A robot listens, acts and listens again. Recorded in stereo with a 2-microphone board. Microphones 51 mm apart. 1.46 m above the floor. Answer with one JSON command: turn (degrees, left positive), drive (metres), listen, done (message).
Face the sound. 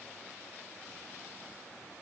{"listen": true}
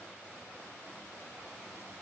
{"listen": true}
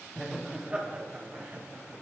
{"turn": -40}
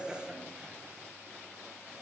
{"turn": -20}
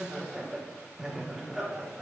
{"turn": -10}
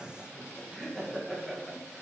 {"done": "Facing the laughter."}